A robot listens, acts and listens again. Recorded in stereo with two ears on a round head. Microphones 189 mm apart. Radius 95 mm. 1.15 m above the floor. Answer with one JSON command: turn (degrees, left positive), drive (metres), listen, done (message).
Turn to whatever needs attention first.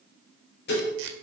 {"listen": true}
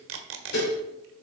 {"listen": true}
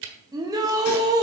{"turn": -20}
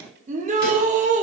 {"turn": -145}
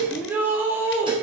{"turn": -10}
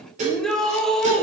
{"done": "Found it: a shout, straight ahead."}